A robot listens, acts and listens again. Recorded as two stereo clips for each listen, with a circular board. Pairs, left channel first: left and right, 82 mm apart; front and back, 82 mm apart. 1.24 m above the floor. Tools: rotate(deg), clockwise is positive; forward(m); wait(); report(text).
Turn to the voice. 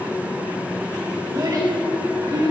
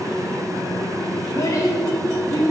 rotate(50)
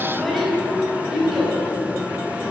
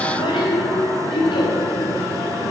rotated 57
report("Found it: a child speaking, straight ahead, over 4 m away.")